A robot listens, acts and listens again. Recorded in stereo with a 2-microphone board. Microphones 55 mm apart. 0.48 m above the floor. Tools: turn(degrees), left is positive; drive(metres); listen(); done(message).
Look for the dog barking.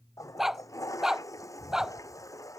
turn(degrees=-30)
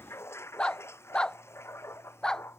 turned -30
turn(degrees=10)
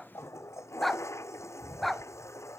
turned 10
done("Found it: a dog barking, straight ahead.")